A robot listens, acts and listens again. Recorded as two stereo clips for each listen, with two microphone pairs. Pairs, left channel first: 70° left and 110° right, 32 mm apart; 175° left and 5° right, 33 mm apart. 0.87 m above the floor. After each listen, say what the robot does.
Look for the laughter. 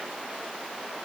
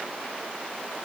Keep listening.
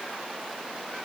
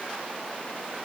Keep listening.
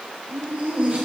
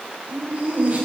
Turn 55° right.
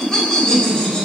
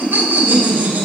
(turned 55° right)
Found it: laughter, straight ahead.